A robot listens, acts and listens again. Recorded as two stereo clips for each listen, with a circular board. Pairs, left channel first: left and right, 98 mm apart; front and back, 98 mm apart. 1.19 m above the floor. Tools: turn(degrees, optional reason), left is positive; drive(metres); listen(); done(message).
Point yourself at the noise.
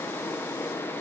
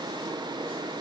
listen()
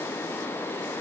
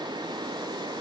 listen()
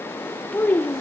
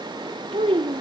turn(degrees=160, reason="The child speaking: 160° left.")
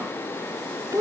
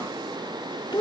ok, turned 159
turn(degrees=-40, reason="The child speaking is now 40° right.")
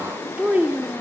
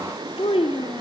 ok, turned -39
turn(degrees=-20, reason="The child speaking is now 20° right.")
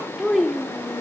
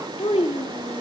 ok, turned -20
done("Found it: a child speaking, straight ahead, 1 to 2 m away.")